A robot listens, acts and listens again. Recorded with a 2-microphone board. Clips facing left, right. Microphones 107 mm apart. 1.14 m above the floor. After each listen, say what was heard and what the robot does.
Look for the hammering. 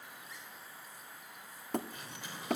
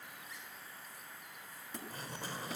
The hammering: about 65° left or 115° left. Turn 65° left.
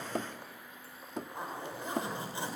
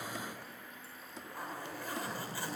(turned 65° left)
So it is at 50° left. Turn 50° left.
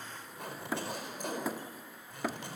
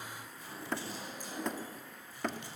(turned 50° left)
Facing the hammering, 1 to 2 m away.